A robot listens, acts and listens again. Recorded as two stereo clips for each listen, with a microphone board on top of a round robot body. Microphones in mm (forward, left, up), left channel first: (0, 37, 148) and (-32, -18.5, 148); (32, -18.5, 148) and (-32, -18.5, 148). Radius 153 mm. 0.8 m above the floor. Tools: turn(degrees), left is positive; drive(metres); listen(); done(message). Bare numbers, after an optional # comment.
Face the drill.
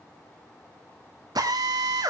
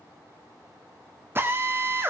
# The drill: 125° right.
turn(-125)
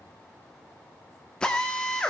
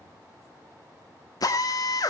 # The drill is now 20° right.
turn(-20)
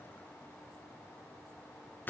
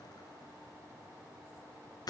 done("Found it: a drill, straight ahead.")